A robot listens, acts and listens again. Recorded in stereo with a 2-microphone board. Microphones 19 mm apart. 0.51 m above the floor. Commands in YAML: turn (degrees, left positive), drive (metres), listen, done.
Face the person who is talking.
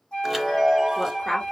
turn: 15
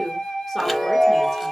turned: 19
done: "Facing the woman speaking."